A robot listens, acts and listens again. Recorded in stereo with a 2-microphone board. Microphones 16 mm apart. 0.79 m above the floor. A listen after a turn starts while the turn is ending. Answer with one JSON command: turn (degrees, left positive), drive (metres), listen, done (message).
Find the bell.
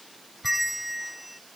{"turn": -30}
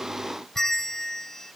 {"turn": 25}
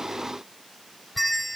{"done": "Found it: a bell, straight ahead."}